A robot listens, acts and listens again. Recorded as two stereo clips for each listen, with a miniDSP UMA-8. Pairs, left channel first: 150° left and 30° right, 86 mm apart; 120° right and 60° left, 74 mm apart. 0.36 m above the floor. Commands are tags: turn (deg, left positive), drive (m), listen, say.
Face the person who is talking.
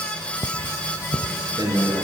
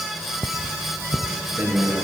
<say>Facing the man speaking.</say>